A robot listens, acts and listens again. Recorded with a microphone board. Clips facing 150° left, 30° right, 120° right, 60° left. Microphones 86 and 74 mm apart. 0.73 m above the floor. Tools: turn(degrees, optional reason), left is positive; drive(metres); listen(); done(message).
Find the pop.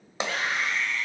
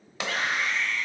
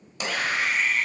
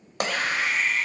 turn(degrees=85, reason="The pop: 85° left.")
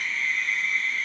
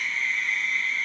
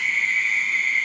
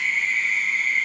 done("Facing where the pop came from. I can't hear it now.")